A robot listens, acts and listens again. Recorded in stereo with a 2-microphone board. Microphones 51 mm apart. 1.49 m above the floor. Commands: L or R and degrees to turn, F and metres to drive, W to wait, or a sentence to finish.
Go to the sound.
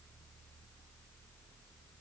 W
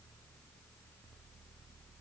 W
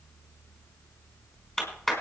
L30
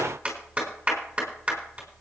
R20
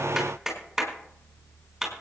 F1.0
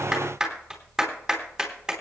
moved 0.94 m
R10
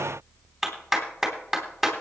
F1.0
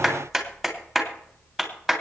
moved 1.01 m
F1.0
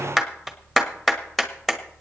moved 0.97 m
F1.0
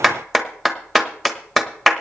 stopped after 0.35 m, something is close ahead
Arrived at the clap, straight ahead.